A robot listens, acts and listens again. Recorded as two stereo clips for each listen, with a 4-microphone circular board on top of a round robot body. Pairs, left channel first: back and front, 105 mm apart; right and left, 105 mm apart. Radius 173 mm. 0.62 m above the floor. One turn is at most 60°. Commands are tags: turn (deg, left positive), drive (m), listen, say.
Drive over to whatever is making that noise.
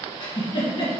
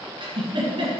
<turn deg="60"/>
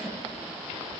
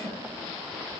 <turn deg="60"/>
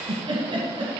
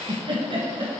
<turn deg="50"/>
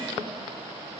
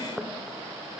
<listen/>
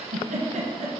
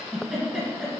<turn deg="10"/>
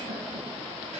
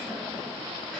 <listen/>
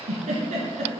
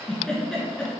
<drive m="1.0"/>
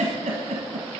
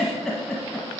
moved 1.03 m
<drive m="1.0"/>
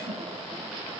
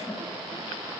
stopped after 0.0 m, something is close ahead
<say>Arrived at the giggle, straight ahead.</say>